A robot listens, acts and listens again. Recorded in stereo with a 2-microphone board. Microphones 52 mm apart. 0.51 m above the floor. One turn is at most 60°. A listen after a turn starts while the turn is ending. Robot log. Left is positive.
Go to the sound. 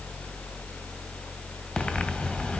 note: The breathing: about 25° left or 155° left.
cmd yaw +25
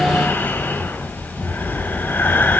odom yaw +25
note: So it is at 130° left.
cmd yaw +60
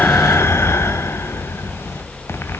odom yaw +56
note: The breathing is now 70° left.
cmd yaw +60
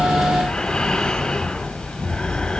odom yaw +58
note: The breathing is now 10° left.
cmd yaw +10
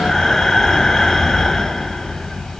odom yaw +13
cmd fwd 1.0
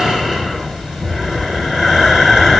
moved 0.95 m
note: The breathing is now 10° right.
cmd yaw -10
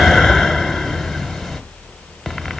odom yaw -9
cmd fwd 1.0
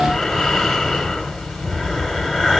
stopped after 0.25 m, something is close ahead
end: I am next to the breathing.